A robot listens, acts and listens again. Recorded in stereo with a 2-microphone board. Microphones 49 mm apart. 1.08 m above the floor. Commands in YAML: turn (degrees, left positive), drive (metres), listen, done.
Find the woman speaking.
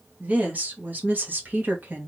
turn: -40
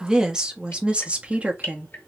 turn: -30
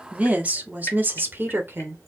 turn: -45
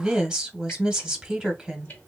turn: -10
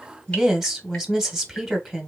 done: "Facing the woman speaking, 1 to 2 m away."